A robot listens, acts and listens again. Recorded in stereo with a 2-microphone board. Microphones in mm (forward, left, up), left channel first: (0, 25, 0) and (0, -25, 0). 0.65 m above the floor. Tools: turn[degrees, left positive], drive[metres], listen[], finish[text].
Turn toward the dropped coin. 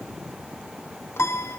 Action: listen[]
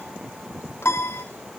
Action: listen[]
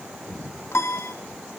Action: finish[I can't make out a dropped coin to turn to.]